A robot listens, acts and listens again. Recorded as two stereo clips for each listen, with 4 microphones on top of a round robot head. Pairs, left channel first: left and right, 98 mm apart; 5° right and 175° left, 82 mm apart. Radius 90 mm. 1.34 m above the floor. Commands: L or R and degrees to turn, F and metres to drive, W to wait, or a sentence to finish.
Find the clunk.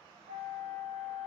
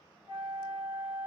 W
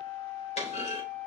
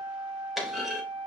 L90
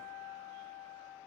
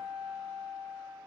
I heard a clunk from this way, but can't make it out now.